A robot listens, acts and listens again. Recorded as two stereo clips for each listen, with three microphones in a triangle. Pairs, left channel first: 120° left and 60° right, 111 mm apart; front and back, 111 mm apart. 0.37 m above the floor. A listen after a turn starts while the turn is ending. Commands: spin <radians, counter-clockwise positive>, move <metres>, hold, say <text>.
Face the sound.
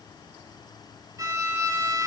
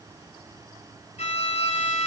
say Found it: a violin, straight ahead.